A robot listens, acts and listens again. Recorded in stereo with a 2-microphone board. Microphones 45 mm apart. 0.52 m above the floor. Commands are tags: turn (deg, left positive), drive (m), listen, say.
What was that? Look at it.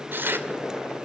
<turn deg="-55"/>
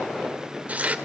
<turn deg="-40"/>
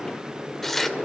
<turn deg="10"/>
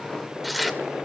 <say>Facing the tearing paper.</say>